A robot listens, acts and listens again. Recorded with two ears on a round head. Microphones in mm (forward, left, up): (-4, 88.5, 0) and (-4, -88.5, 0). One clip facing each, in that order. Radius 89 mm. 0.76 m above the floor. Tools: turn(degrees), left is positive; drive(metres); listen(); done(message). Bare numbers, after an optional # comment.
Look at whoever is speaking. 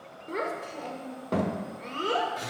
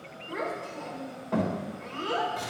# The child speaking: about 45° left or 135° left.
turn(45)
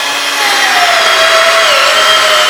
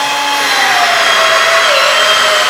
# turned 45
listen()
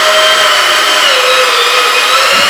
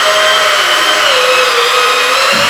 listen()
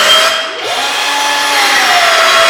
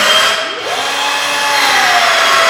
done("I heard a child speaking, but can't make it out now. It was about straight ahead or 90° left.")